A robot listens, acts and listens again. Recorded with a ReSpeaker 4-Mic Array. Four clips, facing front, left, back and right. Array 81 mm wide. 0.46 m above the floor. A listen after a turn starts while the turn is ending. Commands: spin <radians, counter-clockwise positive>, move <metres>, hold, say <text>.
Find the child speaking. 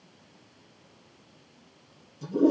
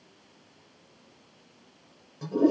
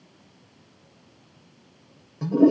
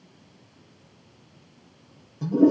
hold
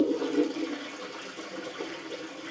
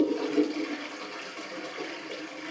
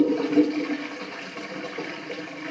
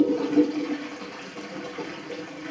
hold
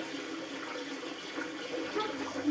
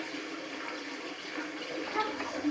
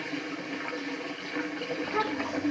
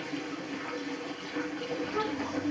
spin 2.88
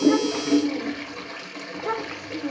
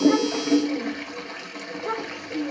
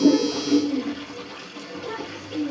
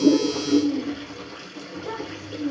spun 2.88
spin 0.61
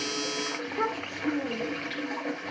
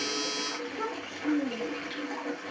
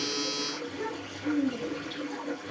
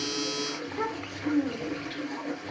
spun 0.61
spin -0.17
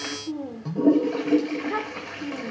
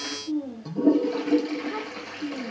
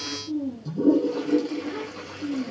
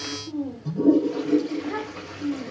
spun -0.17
say Found it: a child speaking, straight ahead.